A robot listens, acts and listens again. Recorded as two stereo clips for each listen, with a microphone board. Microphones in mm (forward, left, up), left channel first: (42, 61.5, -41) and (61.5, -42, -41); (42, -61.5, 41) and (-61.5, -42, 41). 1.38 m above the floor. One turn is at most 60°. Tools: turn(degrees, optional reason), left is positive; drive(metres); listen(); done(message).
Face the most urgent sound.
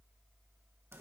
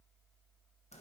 listen()
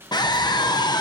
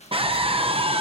turn(degrees=60, reason="The scream: 145° left.")
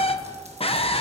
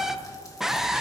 turn(degrees=60, reason="The scream is now 85° left.")
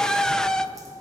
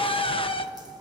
turn(degrees=20, reason="The scream is now 20° left.")
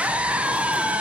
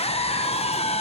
done("Found it: a scream, straight ahead, under 1 m away.")